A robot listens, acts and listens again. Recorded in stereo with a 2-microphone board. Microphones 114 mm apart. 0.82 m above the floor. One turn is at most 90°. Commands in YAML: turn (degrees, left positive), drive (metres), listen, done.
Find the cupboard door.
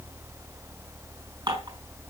listen: true
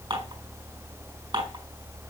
listen: true
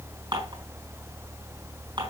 done: "I can't make out a cupboard door to turn to."